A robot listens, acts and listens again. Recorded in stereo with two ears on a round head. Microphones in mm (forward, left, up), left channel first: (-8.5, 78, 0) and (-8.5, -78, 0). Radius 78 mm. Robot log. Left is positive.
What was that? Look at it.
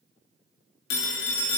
note: The phone ringing: about 75° left or 105° left.
cmd yaw +75
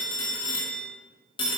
note: So it is at 30° left.
cmd yaw +30
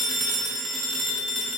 end: Found it: a phone ringing, straight ahead, 1 to 2 m away.